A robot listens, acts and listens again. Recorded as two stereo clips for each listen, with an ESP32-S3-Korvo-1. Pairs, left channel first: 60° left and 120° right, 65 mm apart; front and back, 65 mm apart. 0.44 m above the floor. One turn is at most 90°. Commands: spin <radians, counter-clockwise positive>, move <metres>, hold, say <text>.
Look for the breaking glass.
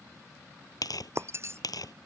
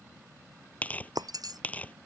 spin -1.57
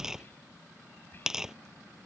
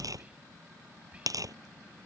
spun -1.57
spin -1.40
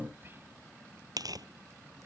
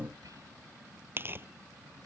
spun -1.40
say I heard breaking glass from this way, but can't make it out now.